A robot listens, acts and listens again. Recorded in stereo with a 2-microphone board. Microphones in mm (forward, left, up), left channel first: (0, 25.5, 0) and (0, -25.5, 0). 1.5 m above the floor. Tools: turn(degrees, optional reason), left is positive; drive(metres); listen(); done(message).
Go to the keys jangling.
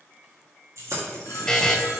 turn(degrees=-90)
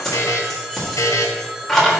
turn(degrees=10, reason="So it is at 10° left.")
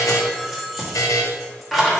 drive(metres=1.0)
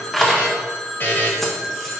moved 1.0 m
drive(metres=1.0)
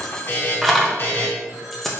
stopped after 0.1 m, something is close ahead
done("Arrived at the keys jangling, straight ahead.")